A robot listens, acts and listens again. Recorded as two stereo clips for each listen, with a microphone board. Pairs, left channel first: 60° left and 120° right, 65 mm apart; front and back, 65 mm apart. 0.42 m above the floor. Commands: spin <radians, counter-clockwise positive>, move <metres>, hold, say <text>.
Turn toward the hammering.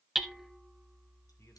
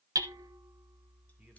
spin 2.71
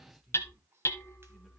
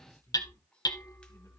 spin 0.26
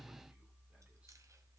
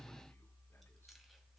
hold
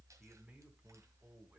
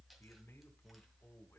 hold
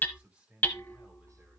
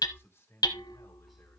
say Facing the hammering, 1 to 2 m away.